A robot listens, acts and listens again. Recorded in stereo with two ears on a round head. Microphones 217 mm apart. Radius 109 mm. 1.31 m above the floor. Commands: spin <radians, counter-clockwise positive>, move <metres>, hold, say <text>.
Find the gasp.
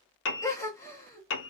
spin 0.52
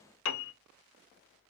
hold
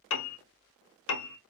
say I heard a gasp, but can't make it out now. It was about 15° right or 135° left.